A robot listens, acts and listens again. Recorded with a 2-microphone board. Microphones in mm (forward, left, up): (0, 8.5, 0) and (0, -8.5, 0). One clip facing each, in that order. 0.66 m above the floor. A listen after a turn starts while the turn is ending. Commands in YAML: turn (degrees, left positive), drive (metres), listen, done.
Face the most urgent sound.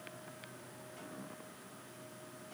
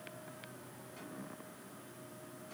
listen: true
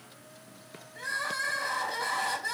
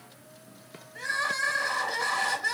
turn: -60
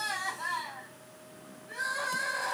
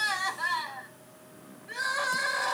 turn: -60
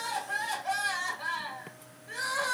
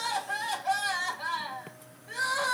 turn: 10
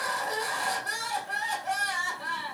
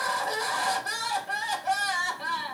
done: "Found it: crying, straight ahead, 2 to 4 m away."